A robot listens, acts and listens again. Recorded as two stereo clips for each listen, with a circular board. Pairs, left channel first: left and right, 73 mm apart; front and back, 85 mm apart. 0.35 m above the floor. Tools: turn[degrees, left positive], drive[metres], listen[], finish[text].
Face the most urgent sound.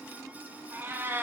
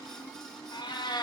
Action: listen[]
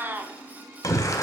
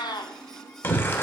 Thought: The shout: 60° left.
Action: turn[60]
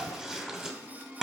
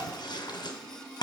Action: finish[Facing the shout.]